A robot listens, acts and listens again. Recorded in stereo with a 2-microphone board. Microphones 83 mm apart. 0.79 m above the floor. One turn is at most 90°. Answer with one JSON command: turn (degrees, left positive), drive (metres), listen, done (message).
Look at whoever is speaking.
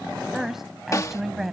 {"turn": -30}
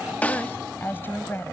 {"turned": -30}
{"turn": 25}
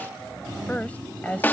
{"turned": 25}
{"turn": 20}
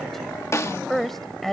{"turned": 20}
{"done": "Facing the woman speaking."}